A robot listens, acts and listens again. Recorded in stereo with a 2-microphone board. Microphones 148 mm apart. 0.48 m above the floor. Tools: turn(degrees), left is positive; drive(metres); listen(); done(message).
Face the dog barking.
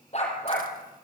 turn(degrees=45)
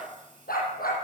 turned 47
turn(degrees=85)
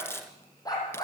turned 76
turn(degrees=25)
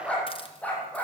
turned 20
turn(degrees=10)
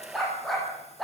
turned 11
done("Found it: a dog barking, straight ahead, over 4 m away.")